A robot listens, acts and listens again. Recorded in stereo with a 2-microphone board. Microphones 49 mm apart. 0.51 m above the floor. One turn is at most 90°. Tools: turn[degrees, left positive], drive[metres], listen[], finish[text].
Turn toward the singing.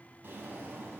Action: listen[]
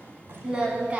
Thought: The singing: about 25° right or 155° right.
Action: turn[-25]
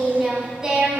Thought: The singing: about 20° right or 160° right.
Action: turn[-20]
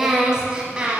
Thought: The singing: about 25° right or 155° right.
Action: turn[-25]
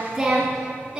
Thought: The singing: about 20° right or 160° right.
Action: turn[-20]
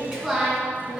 Action: turn[-30]
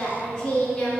Thought: So it is at 15° left.
Action: turn[15]
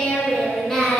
Thought: The singing is now 10° left.
Action: turn[10]
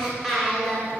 Action: finish[Facing the singing, 2 to 4 m away.]